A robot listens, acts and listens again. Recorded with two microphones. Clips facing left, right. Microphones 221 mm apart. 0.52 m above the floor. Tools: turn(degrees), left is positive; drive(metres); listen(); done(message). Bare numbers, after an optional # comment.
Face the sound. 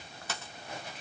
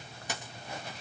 # The dropped coin: about 15° right or 165° right.
turn(-15)
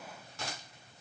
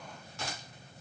listen()
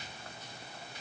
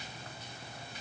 done("I heard a dropped coin, but can't make it out now. It was about straight ahead or 150° right.")